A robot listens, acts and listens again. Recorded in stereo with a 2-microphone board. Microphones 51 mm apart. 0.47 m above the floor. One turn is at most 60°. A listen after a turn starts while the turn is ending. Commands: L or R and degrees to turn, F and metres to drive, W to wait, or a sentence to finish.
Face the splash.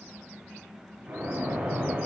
R35
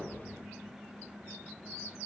W
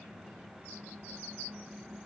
I heard a splash, but can't make it out now. It was about straight ahead or 110° right.